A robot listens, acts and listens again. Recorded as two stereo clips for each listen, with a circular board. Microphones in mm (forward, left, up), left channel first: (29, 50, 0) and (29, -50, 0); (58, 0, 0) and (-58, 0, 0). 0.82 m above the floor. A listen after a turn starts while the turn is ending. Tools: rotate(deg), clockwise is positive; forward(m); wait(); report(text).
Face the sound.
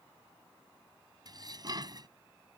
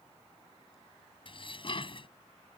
rotate(40)
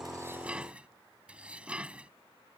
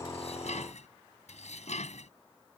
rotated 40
rotate(10)
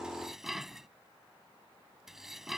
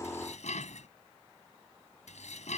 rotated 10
report("Facing the dishes clattering.")